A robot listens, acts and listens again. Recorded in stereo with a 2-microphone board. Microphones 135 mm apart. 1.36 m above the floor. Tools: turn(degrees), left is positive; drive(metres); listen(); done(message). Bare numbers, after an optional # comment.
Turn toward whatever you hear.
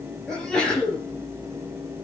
turn(30)
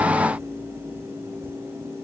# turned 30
listen()
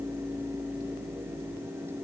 done("I heard a sneeze, but can't make it out now. It was about 25° right or 145° left.")